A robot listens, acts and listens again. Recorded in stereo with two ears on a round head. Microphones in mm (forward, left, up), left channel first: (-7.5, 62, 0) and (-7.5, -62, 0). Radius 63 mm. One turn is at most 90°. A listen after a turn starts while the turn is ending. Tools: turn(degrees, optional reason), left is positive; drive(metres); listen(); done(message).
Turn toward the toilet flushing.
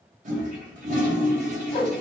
turn(degrees=-60, reason="The toilet flushing: about 60° right or 120° right.")
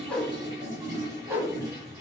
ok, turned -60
turn(degrees=-30, reason="So it is at 30° right.")
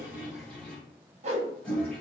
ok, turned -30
turn(degrees=10, reason="The toilet flushing is now 10° left.")
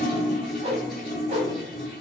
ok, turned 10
done("Found it: a toilet flushing, straight ahead.")